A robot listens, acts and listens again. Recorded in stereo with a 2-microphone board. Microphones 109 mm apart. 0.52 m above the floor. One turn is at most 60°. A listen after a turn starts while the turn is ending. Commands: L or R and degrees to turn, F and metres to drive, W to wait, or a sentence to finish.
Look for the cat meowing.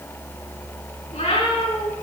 L60
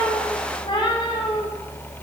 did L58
L50
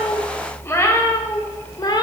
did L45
L45
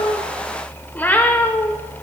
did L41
L15
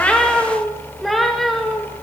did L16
Found it: a cat meowing, straight ahead, 1 to 2 m away.